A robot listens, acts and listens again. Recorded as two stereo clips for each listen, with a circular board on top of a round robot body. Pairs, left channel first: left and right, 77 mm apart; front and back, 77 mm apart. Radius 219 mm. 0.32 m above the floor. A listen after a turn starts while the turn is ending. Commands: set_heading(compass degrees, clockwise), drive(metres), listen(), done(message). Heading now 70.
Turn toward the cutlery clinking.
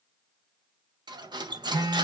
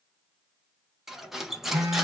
set_heading(165)
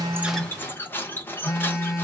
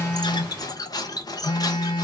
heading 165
set_heading(135)
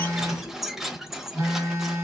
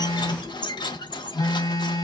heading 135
done("Facing the cutlery clinking.")